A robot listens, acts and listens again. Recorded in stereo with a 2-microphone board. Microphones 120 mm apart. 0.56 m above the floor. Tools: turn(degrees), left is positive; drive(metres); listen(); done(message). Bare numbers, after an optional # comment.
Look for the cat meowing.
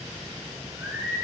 listen()
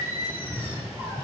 # The cat meowing: about 15° left or 165° left.
turn(15)
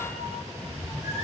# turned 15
turn(-30)
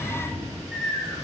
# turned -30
# So it is at 15° left.
turn(15)
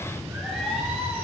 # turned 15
done("Found it: a cat meowing, straight ahead.")